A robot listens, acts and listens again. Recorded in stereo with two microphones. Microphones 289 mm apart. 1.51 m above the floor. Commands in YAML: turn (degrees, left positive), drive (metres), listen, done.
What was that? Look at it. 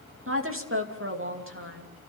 turn: -45
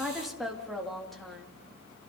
done: "Facing the woman speaking, 2 to 4 m away."